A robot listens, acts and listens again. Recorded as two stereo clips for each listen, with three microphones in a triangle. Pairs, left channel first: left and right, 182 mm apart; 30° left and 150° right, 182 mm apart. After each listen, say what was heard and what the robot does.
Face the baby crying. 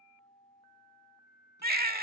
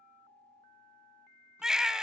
The baby crying: 65° right. Turn 65° right.
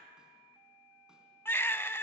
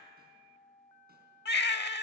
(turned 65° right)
The baby crying is now 15° left. Turn 15° left.
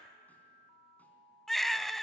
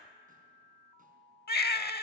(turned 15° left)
Found it: a baby crying, straight ahead.